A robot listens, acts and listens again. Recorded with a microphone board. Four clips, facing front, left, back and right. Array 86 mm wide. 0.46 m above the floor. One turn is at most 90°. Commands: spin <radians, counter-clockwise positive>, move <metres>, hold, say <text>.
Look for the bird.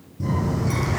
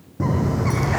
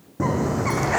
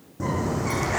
spin 1.57
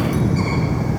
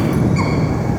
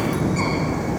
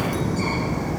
spin 1.57
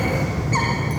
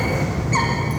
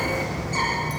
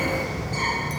spin 0.96
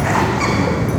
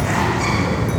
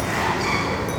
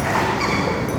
spin -0.35
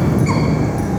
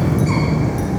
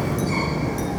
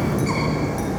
say Found it: a bird, straight ahead.